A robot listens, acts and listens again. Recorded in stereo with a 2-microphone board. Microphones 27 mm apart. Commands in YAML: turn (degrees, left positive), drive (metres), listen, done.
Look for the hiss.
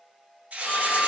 turn: -70
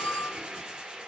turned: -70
turn: -30
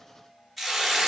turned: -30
done: "Found it: a hiss, straight ahead, under 1 m away."